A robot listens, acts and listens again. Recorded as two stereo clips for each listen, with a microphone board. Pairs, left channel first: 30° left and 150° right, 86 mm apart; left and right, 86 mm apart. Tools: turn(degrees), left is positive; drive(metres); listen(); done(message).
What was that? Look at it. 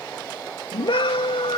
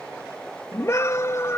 turn(degrees=30)
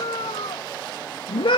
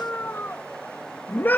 turn(degrees=20)
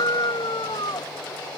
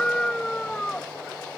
turn(degrees=10)
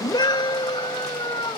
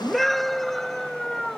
done("Found it: a scream, straight ahead.")